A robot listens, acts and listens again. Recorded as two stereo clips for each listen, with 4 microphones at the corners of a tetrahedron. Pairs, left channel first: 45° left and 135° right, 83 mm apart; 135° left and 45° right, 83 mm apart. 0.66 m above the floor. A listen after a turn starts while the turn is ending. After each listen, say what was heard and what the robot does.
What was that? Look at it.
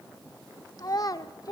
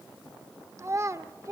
Found it: a child speaking, straight ahead.